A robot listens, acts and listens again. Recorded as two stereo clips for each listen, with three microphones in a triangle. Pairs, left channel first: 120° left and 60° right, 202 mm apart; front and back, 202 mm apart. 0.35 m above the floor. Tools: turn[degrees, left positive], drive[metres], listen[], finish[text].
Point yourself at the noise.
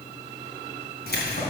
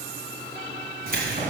Thought: The keys jangling: 140° left.
Action: turn[140]
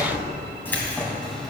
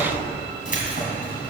Thought: The keys jangling is now 30° left.
Action: turn[30]
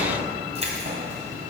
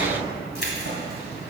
Thought: The keys jangling is now 20° right.
Action: turn[-20]
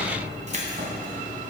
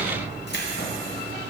Thought: The keys jangling is now 20° right.
Action: turn[-20]
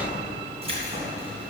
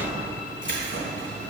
Action: finish[Found it: keys jangling, straight ahead.]